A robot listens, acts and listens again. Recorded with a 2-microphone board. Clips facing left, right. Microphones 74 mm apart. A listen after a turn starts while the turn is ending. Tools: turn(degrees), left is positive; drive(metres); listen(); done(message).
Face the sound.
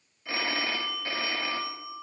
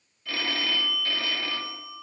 turn(degrees=20)
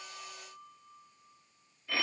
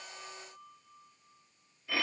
done("Found it: a phone ringing, straight ahead.")